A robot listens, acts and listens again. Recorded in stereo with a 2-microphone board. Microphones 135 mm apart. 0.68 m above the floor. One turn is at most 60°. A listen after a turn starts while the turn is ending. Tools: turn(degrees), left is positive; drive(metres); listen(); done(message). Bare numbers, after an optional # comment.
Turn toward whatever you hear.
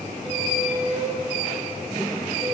# The squeak: about 50° right or 130° right.
turn(-50)
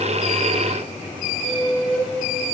done("Found it: a squeak, straight ahead.")